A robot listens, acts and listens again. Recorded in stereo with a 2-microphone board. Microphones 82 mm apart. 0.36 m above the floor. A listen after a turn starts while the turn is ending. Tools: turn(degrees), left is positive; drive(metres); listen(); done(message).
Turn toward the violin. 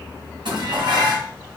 listen()
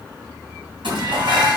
listen()
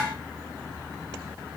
done("I can't make out a violin, only dishes clattering.")